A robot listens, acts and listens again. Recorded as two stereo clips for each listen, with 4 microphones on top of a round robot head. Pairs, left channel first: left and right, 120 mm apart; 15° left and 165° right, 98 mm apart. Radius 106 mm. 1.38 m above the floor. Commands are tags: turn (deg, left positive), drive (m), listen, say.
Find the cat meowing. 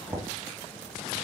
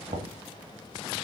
<listen/>
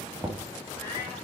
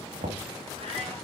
<listen/>
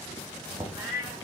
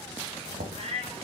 <turn deg="170"/>
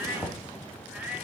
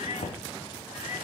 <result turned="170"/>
<turn deg="-15"/>
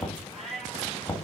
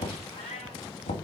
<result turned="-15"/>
<say>Facing the cat meowing.</say>